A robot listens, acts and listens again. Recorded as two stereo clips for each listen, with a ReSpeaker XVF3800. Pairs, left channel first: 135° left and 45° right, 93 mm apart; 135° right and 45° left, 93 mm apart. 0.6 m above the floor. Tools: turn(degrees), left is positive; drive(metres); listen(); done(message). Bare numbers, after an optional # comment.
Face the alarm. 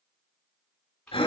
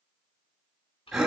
listen()
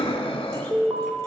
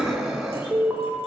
# The alarm: 20° right.
turn(-20)
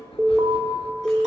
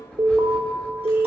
done("Facing the alarm, 1 to 2 m away.")